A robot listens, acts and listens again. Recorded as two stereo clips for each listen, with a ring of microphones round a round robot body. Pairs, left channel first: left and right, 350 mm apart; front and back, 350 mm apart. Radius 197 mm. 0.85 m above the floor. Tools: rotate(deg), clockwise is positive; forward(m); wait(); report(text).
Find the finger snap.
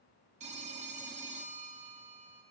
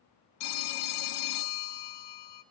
wait()
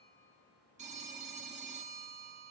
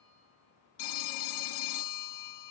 wait()
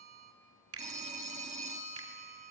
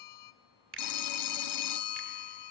rotate(125)
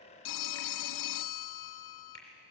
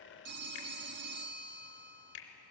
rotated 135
rotate(-10)
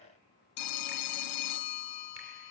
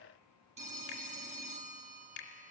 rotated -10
wait()
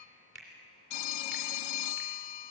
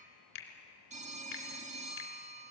report("Facing the finger snap.")